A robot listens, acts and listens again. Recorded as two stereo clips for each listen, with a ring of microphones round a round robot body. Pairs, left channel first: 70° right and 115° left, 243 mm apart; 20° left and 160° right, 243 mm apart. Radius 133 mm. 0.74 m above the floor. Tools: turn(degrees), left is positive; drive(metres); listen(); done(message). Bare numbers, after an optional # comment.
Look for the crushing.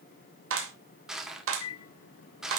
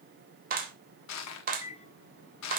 # The crushing: 25° left.
turn(25)
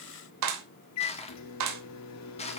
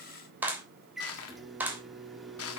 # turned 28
done("Facing the crushing.")